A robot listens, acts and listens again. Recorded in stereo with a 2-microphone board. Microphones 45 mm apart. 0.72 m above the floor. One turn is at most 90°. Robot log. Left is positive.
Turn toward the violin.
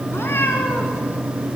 cmd idle
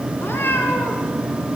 cmd idle
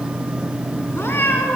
end: I can't make out a violin, only a cat meowing.